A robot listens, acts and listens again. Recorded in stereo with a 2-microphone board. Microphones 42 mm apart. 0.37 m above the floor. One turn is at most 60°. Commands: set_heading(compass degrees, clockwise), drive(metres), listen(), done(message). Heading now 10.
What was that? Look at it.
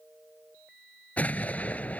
set_heading(330)
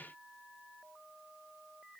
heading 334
listen()
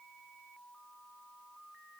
done("I heard an explosion, but can't make it out now. It was about straight ahead or 105° left.")